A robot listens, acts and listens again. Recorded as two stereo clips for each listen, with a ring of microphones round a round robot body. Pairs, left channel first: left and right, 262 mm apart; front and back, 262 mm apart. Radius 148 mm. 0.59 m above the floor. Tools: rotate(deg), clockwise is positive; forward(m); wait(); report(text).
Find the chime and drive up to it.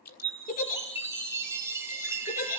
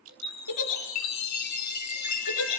rotate(10)
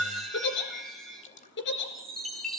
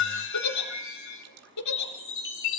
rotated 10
forward(1.0)
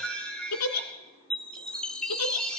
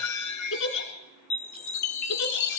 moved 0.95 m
forward(1.0)
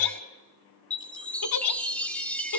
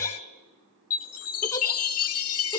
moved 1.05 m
forward(1.0)
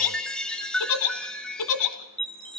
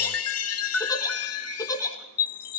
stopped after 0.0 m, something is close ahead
report("I am next to the chime.")